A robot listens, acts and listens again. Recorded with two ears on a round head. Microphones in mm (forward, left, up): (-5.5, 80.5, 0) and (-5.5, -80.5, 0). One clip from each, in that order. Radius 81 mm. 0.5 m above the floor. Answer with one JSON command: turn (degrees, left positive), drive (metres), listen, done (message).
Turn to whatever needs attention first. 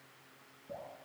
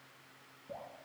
{"listen": true}
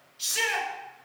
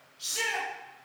{"turn": 40}
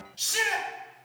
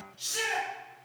{"turn": 100}
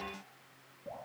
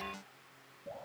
{"listen": true}
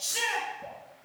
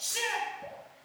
{"done": "Facing the shout."}